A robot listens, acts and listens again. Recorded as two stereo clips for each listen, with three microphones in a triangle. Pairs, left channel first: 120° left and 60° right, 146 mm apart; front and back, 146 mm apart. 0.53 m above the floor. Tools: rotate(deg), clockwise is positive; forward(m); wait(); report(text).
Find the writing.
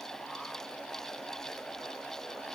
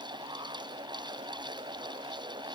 wait()
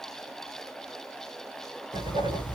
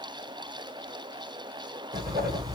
rotate(115)
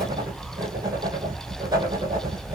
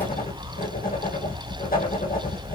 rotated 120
report("Facing the writing, over 4 m away.")